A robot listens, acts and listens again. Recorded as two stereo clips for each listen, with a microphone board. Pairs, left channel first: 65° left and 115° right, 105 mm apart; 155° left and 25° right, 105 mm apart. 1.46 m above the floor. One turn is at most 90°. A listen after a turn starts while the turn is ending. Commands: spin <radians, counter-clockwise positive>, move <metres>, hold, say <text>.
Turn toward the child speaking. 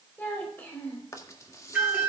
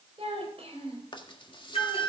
say Facing the child speaking.